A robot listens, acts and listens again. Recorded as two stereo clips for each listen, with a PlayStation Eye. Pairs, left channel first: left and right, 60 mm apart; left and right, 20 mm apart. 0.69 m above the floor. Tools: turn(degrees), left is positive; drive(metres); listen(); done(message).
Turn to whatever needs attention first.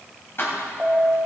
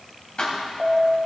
turn(degrees=-30)
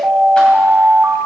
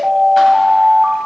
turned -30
turn(degrees=-135)
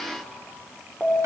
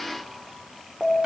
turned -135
done("Facing the alarm.")